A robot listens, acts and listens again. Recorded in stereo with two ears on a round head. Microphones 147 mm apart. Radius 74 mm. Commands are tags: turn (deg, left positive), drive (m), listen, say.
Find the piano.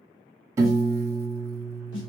<turn deg="-20"/>
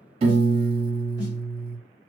<turn deg="-140"/>
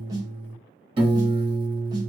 <turn deg="-35"/>
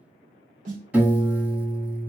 <turn deg="-10"/>
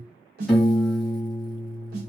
<say>Facing the piano.</say>